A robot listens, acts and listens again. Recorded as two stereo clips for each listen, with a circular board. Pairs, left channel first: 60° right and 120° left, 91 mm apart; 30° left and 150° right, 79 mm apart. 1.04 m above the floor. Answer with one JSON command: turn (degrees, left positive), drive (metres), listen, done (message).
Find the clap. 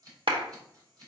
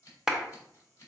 {"turn": 130}
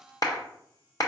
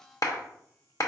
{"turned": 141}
{"turn": -10}
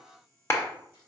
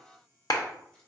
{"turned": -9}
{"done": "Facing the clap, under 1 m away."}